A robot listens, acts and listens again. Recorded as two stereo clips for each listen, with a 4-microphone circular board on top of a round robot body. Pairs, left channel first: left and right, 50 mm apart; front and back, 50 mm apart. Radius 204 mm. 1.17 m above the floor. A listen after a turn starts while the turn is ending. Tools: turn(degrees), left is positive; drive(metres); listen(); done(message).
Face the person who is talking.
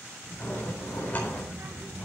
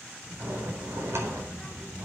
turn(degrees=-110)
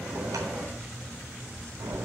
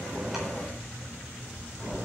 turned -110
turn(degrees=20)
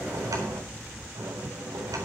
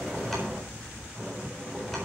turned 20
done("Facing the child speaking, 2 to 4 m away.")